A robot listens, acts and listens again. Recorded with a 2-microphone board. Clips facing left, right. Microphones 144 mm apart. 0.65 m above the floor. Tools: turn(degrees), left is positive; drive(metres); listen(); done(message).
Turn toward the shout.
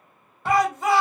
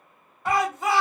turn(degrees=30)
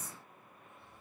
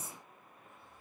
listen()
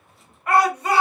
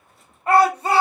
turn(degrees=-30)
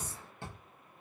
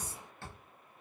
listen()
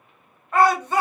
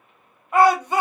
turn(degrees=-15)
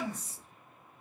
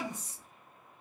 listen()
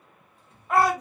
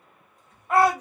done("Found it: a shout, straight ahead, 1 to 2 m away.")